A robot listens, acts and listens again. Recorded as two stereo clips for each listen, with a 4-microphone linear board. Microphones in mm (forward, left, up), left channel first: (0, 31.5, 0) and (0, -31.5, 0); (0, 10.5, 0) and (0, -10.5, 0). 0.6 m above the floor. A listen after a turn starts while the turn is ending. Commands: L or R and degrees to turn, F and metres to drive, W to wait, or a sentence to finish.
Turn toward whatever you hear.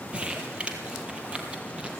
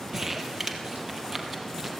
R20
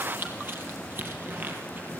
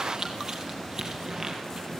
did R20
R145
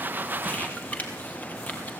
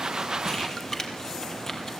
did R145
L25
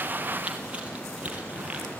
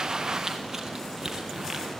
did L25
R20
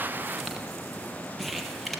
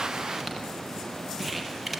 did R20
Facing the crumpling, 2 to 4 m away.